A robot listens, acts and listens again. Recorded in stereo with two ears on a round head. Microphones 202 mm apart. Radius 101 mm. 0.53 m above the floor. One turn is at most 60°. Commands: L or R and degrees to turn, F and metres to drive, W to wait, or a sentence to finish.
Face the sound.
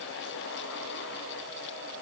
W
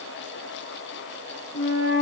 L40
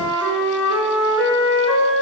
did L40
Facing the flute, over 4 m away.